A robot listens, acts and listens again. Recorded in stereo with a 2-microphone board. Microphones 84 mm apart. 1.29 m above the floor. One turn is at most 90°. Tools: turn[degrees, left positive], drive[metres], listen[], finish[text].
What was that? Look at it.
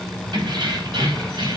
Action: turn[-90]
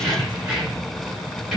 Action: finish[Found it: keys jangling, straight ahead.]